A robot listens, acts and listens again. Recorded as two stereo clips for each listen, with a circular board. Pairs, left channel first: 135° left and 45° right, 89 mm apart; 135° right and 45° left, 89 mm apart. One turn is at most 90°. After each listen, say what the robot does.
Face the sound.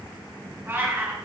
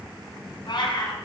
Turn 90° right.
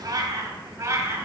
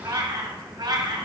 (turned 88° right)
Turn 15° left.
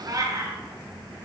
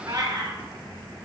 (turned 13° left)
Turn 10° left.
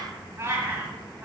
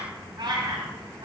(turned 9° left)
Turn 20° left.
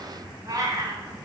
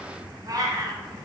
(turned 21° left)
Found it: a cat meowing, straight ahead, 1 to 2 m away.